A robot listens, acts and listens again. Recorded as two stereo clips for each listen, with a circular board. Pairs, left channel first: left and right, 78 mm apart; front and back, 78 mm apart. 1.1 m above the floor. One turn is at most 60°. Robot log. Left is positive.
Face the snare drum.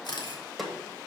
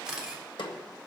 end: Facing the snare drum.